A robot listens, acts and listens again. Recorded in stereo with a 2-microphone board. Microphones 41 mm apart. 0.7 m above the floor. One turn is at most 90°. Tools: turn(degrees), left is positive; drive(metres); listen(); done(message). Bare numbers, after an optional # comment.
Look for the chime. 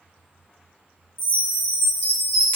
turn(-90)
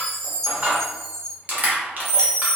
done("Facing the chime.")